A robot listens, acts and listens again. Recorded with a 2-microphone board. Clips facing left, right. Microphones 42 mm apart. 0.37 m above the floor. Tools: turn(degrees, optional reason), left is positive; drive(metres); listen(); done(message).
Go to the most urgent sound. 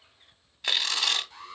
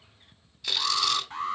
turn(degrees=-45, reason="The alarm: about 45° right or 135° right.")
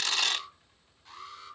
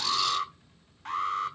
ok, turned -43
turn(degrees=-90, reason="So it is at 90° right.")
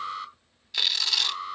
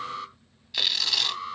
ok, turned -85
drive(metres=1.0)
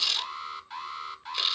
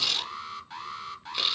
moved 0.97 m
drive(metres=1.0)
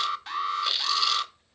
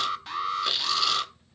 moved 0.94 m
drive(metres=1.0)
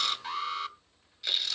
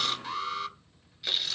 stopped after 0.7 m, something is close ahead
done("Arrived at the alarm, straight ahead.")